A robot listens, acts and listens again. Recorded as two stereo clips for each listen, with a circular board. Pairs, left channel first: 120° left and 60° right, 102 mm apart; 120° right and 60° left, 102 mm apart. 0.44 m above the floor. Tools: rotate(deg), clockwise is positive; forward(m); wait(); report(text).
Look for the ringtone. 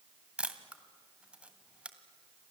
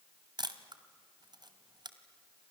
wait()
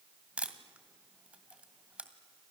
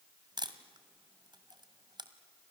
wait()
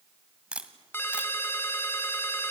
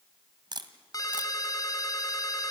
rotate(170)
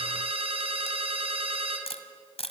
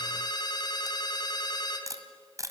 rotate(75)
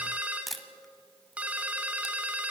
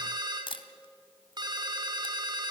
rotate(-20)
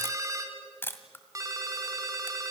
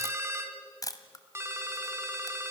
report("Found it: a ringtone, straight ahead.")